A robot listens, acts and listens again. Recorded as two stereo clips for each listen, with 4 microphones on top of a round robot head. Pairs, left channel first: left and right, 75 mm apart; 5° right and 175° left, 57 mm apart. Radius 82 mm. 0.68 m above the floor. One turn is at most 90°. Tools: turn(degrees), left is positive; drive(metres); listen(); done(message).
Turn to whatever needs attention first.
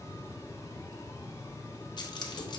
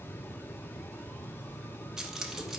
listen()
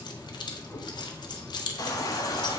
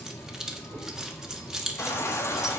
turn(degrees=35)
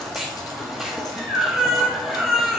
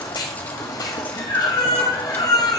done("Found it: a baby crying, straight ahead, 1 to 2 m away.")